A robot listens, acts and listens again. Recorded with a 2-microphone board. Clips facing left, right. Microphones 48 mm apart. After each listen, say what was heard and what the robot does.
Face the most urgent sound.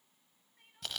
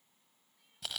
The crying: about 50° left or 130° left. Turn 50° left.
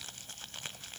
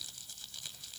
Keep listening.
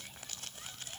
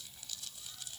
Keep listening.
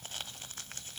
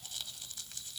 I heard crying, but can't make it out now. It was about straight ahead or 80° left.